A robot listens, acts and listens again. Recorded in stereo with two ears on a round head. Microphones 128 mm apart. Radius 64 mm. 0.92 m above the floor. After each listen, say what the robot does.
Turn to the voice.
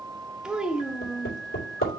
Turn 30° right.
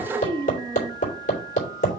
Turn 145° right.
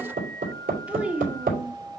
Turn 10° right.
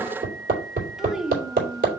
Found it: a child speaking, straight ahead, under 1 m away.